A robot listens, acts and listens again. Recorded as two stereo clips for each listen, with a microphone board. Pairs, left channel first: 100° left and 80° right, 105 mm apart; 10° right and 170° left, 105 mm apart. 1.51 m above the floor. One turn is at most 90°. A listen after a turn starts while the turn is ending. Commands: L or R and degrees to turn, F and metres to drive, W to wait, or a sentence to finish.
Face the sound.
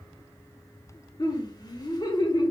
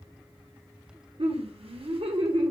L90
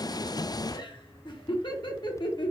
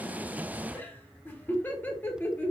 L60
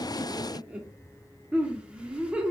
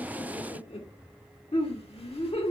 Facing the laughter.